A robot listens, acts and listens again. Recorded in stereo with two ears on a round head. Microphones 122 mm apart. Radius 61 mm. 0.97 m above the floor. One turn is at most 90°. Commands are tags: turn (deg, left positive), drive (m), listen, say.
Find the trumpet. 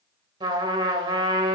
<turn deg="-35"/>
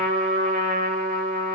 <turn deg="-90"/>
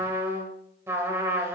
<turn deg="-15"/>
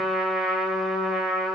<say>Facing the trumpet, 1 to 2 m away.</say>